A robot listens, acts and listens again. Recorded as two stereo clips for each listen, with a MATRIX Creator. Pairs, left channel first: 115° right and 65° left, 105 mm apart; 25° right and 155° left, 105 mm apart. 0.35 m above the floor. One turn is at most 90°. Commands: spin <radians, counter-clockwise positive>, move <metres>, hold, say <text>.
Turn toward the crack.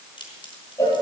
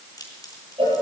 spin -1.31
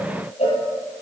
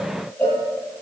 say Facing where the crack came from. I can't hear it now.